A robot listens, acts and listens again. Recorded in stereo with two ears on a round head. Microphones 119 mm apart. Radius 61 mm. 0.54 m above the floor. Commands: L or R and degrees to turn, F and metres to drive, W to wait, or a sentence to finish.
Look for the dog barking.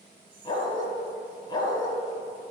L35
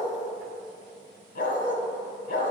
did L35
L110
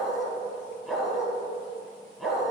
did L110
Facing the dog barking, 1 to 2 m away.